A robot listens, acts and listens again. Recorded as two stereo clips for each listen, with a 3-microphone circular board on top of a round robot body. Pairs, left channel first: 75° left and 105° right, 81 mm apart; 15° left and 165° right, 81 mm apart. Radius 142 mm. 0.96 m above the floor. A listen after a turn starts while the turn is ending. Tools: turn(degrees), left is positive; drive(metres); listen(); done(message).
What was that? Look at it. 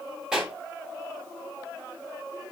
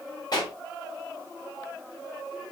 turn(degrees=-25)
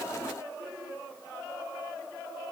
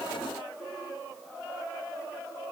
done("Facing where the pop came from. I can't hear it now.")